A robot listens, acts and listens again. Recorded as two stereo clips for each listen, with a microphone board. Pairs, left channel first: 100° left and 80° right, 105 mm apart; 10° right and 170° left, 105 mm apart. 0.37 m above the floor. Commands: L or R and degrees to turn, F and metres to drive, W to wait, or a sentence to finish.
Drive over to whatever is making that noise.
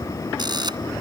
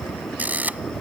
R120
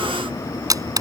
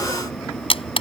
R30
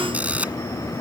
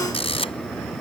F1.0
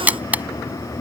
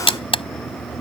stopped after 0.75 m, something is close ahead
Something is in my way. I am facing the camera shutter but have not reached it.